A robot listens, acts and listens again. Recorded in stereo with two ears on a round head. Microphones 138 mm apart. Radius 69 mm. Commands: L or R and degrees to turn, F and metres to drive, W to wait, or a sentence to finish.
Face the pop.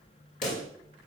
L55
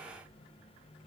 W
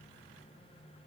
I heard a pop, but can't make it out now. It was about straight ahead or 70° left.